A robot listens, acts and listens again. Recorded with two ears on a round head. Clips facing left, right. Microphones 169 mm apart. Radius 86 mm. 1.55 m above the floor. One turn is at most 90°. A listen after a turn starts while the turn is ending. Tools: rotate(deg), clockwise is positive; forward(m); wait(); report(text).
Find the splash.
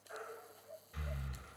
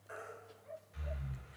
wait()
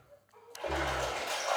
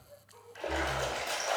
rotate(30)
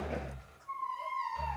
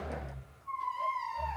wait()
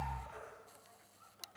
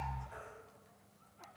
report("I heard a splash, but can't make it out now. It was about straight ahead or 120° right.")